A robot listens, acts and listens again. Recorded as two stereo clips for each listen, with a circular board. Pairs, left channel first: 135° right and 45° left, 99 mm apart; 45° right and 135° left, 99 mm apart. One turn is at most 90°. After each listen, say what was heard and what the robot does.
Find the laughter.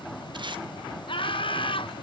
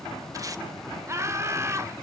The laughter: 165° right. Turn 90° right.
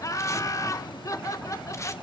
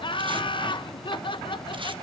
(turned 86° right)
The laughter is now 80° right. Turn 80° right.
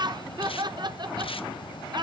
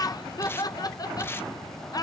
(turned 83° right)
Facing the laughter, 1 to 2 m away.